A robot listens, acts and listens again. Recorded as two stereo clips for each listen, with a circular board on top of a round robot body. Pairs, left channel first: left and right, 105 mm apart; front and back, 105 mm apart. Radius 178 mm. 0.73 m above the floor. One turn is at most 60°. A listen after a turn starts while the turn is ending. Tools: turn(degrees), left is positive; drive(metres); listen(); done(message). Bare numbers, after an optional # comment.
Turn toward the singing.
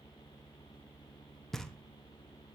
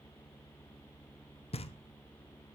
listen()
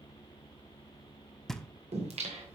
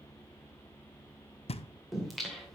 # The singing: 85° right.
turn(-60)
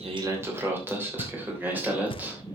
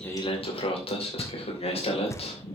# The singing is now 15° right.
turn(-15)
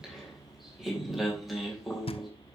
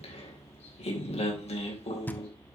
done("Found it: singing, straight ahead, 2 to 4 m away.")